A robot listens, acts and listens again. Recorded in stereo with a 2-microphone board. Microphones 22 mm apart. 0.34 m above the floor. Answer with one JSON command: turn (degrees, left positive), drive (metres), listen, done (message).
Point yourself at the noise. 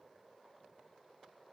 {"listen": true}
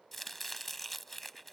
{"turn": 30}
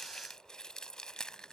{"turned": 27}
{"turn": 140}
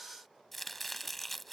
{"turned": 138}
{"done": "Found it: chopping, straight ahead."}